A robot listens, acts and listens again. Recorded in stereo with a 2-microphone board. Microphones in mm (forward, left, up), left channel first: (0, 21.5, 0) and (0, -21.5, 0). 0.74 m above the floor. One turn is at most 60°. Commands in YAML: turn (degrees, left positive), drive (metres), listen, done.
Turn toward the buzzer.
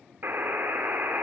turn: -55
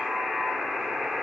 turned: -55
done: "Facing the buzzer, 1 to 2 m away."